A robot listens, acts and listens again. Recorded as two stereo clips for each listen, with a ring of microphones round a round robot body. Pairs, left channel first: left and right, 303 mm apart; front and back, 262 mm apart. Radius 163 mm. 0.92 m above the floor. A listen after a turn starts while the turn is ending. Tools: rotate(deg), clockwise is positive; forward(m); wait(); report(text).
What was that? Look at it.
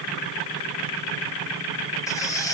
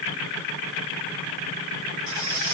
rotate(-170)
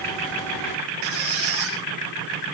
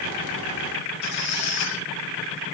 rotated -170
rotate(45)
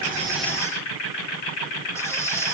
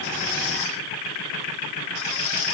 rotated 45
rotate(-10)
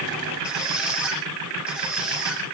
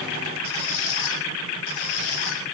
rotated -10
report("Found it: a squeak, straight ahead, over 4 m away.")